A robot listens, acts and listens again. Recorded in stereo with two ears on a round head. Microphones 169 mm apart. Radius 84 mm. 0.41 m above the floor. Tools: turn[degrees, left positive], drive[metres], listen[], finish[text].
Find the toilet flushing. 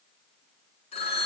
Action: listen[]
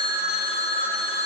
Action: listen[]
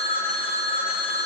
Action: finish[I can't make out a toilet flushing, only a phone ringing.]